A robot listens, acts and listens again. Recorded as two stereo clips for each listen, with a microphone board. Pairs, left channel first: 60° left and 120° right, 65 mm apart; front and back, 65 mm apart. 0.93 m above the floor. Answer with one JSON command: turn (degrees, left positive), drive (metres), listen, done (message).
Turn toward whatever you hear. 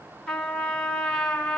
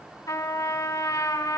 {"turn": -20}
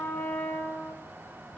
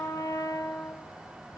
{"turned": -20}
{"done": "Facing the trumpet."}